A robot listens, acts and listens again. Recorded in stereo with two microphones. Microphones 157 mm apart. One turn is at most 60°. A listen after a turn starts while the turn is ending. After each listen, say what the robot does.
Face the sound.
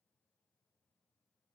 Keep listening.
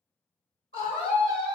Turn 40° left.
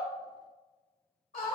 Turn 60° left.
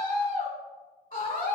Turn 60° left.
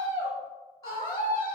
Turn 25° left.
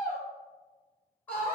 Turn 10° left.
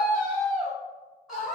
Found it: a scream, straight ahead, 1 to 2 m away.